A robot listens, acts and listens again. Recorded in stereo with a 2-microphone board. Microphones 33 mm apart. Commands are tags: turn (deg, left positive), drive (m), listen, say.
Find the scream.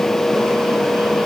<listen/>
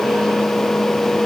<listen/>
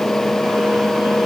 <say>I can't make out a scream.</say>